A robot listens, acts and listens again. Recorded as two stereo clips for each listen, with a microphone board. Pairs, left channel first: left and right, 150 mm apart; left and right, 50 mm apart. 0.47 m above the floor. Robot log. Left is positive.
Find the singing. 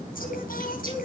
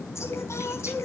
cmd yaw +90
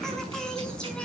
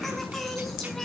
end: Found it: singing, straight ahead, over 4 m away.